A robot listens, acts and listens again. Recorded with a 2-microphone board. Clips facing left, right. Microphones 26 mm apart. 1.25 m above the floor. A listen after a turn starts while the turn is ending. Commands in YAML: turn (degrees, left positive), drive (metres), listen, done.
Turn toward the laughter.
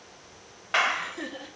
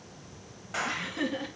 turn: -50
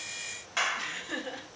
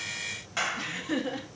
turn: -15
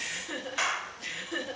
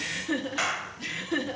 turn: -25
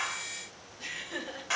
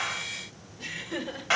turn: -10
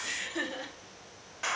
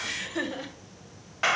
done: "Found it: laughter, straight ahead, 2 to 4 m away."